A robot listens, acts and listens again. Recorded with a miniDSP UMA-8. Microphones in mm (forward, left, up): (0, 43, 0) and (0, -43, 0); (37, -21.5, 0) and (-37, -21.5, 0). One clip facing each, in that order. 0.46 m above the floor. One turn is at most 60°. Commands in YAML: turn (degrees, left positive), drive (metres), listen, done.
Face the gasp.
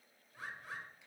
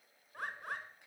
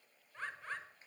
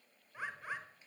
listen: true
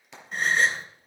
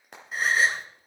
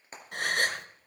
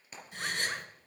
done: "Facing the gasp, 1 to 2 m away."